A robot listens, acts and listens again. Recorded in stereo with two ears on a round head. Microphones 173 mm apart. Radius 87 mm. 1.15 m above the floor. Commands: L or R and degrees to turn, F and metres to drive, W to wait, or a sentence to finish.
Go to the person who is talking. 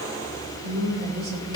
R90
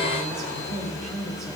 F1.0
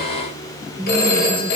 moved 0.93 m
R10
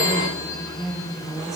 F1.0
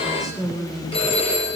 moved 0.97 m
F1.0
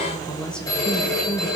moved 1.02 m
F1.0
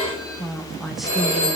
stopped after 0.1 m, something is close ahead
Arrived at the woman speaking, straight ahead.